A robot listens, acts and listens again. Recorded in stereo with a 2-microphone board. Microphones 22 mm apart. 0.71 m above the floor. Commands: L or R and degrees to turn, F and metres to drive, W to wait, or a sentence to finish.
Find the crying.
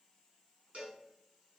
W
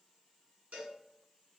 W
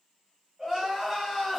R20
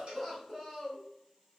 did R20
Facing the crying, 1 to 2 m away.